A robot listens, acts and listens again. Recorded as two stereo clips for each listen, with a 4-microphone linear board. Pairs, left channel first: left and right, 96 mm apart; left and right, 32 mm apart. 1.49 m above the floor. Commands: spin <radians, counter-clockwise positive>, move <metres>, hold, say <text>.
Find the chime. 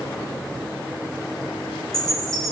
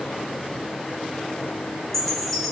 spin 0.52
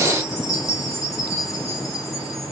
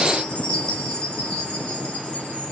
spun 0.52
spin 2.53
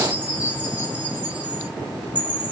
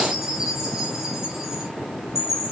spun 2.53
spin -0.26
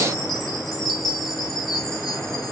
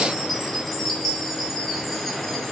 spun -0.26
say Facing the chime, 1 to 2 m away.